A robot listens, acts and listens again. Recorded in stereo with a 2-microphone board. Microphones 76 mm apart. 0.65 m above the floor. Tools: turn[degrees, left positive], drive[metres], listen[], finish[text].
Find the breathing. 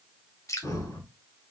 Thought: The breathing: about 50° left or 130° left.
Action: turn[50]
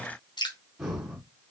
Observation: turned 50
Action: finish[Facing the breathing, 2 to 4 m away.]